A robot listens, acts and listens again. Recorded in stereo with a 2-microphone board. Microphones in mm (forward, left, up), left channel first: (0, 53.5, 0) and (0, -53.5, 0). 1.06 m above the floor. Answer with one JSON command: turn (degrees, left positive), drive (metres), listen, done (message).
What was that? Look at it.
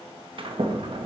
{"turn": -55}
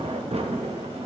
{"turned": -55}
{"turn": -70}
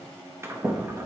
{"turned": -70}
{"turn": -25}
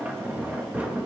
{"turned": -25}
{"turn": -15}
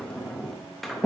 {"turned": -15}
{"done": "Facing the sliding door."}